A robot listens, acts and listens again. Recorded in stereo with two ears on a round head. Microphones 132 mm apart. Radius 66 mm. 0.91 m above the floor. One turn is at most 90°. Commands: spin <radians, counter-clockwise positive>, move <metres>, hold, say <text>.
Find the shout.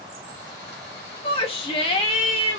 spin 0.70
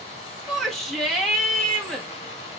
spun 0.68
say Facing the shout, 1 to 2 m away.